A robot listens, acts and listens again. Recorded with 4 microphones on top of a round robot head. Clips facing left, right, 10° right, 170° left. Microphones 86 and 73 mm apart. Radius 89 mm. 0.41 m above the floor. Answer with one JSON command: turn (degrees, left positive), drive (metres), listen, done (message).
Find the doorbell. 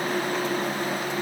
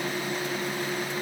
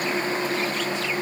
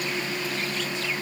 {"listen": true}
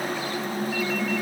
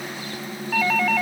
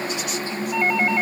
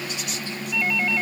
{"turn": -65}
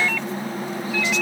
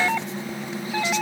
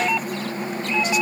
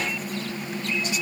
{"turn": -25}
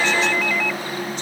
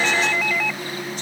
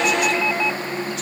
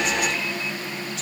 {"done": "Facing the doorbell."}